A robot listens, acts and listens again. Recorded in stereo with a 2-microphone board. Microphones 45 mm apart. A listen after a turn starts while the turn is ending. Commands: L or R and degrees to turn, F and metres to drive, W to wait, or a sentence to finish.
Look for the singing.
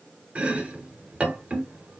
W
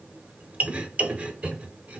W
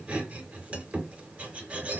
I can't make out singing to turn to.